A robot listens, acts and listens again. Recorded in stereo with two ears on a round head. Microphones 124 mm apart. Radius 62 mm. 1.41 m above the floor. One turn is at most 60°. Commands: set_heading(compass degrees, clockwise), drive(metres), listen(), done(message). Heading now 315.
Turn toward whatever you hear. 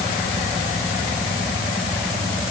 listen()
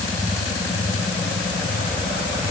listen()
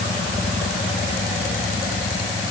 done("I can't make out anything to turn to.")